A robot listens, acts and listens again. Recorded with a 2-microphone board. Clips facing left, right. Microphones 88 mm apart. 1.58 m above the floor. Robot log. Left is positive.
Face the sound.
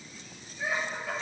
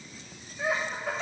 note: The laughter: about 65° right or 115° right.
cmd yaw -65
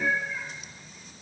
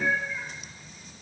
note: So it is at 10° left.
cmd yaw +10
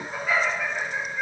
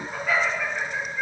note: The laughter is now 10° left.
cmd yaw +10
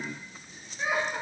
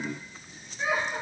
end: Found it: laughter, straight ahead.